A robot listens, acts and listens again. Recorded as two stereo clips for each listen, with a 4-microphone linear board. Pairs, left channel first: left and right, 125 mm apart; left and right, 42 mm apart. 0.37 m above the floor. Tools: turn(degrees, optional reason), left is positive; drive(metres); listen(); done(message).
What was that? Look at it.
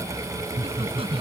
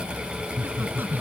turn(degrees=-50, reason="The laughter: about 50° right or 130° right.")
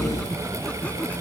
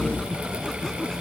turn(degrees=10, reason="So it is at 10° left.")
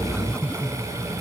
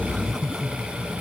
turn(degrees=10, reason="The laughter is now 10° left.")
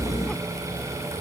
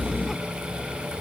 listen()
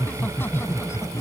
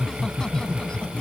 turn(degrees=20, reason="The laughter is now 20° left.")
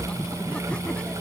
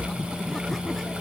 turn(degrees=10, reason="The laughter is now 10° left.")
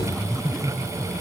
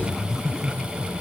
done("Facing the laughter.")